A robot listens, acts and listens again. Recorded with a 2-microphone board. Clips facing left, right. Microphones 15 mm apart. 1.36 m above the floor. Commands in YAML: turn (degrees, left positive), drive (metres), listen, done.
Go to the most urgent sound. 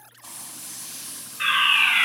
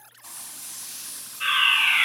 turn: 70
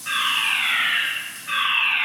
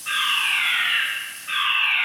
turn: 15
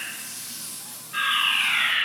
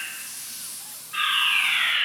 drive: 1.0
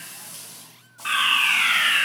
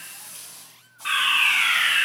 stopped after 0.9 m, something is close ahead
done: "Arrived at the fire alarm, straight ahead."